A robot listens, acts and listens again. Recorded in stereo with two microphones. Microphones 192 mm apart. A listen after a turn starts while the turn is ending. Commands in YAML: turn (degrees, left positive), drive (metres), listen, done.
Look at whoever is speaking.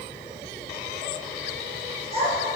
turn: -35
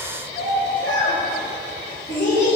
turn: 15
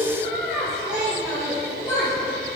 done: "Found it: a child speaking, straight ahead."